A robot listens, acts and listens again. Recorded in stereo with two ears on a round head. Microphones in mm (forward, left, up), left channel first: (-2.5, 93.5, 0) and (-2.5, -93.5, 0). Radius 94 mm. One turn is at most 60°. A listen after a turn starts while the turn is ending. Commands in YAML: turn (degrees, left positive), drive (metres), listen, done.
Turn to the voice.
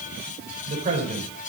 turn: -35
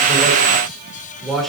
done: "Facing the man speaking."